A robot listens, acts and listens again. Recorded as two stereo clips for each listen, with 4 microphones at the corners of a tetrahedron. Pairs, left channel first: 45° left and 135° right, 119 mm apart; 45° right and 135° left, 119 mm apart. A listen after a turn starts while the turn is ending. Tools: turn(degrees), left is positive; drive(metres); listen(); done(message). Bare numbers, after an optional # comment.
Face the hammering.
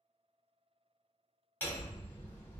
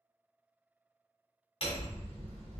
# The hammering: 30° right.
turn(-30)
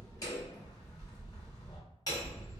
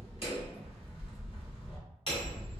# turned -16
# The hammering is now 10° right.
turn(-10)
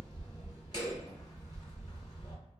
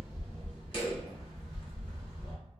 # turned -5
done("Found it: hammering, straight ahead.")